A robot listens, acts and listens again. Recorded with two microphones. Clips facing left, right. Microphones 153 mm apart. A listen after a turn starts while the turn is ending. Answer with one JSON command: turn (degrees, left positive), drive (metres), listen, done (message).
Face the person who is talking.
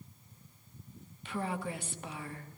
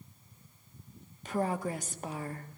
{"turn": -40}
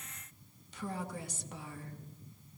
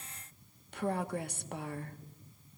{"turn": -90}
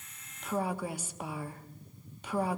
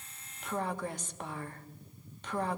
{"turn": 10}
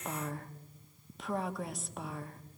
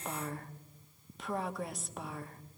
{"done": "Found it: a woman speaking, straight ahead."}